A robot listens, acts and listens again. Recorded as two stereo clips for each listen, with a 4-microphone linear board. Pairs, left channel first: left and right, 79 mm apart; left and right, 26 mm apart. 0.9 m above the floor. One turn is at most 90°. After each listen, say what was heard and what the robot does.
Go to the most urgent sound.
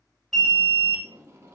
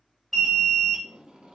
Turn 30° left.
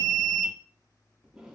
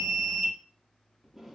So it is at 25° right. Turn 25° right.
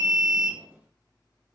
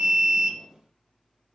The alarm is now 15° right. Turn 15° right.
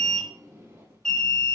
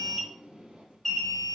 Drive 1.0 m forward.
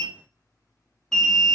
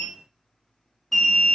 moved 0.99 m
Drive 1.0 m forward.
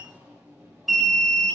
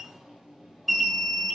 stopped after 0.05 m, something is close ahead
Arrived at the alarm, straight ahead.